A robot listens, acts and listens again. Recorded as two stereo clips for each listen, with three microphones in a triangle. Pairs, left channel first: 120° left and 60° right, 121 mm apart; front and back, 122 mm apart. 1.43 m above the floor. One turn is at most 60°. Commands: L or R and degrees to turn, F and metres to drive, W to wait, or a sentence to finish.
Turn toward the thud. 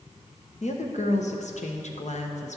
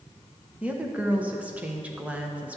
W
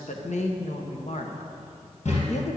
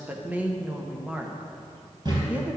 L60
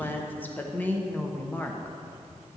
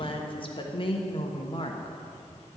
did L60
L60
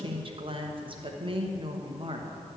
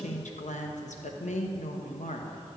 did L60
L15
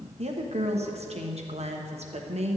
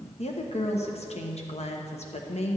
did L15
I heard a thud from this way, but can't make it out now.